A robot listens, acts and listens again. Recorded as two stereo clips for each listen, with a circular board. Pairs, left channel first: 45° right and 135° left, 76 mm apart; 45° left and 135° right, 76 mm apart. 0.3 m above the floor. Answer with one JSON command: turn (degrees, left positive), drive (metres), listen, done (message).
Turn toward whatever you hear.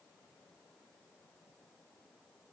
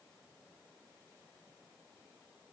{"listen": true}
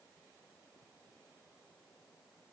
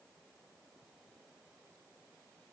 {"listen": true}
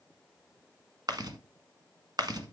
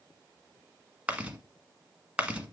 {"turn": 150}
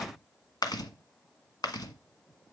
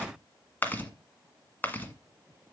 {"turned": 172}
{"turn": -20}
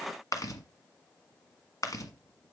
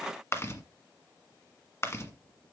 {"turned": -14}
{"done": "Found it: chewing, straight ahead."}